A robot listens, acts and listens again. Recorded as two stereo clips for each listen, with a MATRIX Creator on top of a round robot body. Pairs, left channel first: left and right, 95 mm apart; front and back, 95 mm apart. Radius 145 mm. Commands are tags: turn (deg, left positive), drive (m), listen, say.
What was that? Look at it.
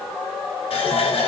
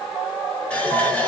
<turn deg="80"/>
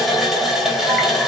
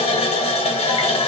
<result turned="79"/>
<say>Facing the running tap, 2 to 4 m away.</say>